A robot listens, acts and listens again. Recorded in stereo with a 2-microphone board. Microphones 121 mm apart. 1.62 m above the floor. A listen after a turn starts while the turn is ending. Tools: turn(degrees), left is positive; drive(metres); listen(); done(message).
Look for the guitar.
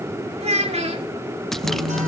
turn(degrees=-90)
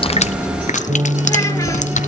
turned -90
turn(degrees=-10)
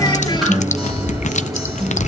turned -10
done("Found it: a guitar, straight ahead, over 4 m away.")